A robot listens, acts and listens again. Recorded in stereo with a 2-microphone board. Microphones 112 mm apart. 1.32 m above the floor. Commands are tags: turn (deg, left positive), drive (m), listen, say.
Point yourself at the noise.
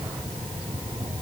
<listen/>
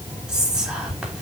<turn deg="-30"/>
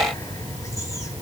<listen/>
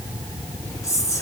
<turn deg="30"/>
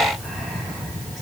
<listen/>
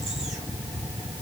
<listen/>
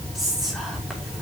<say>Found it: whispering, straight ahead.</say>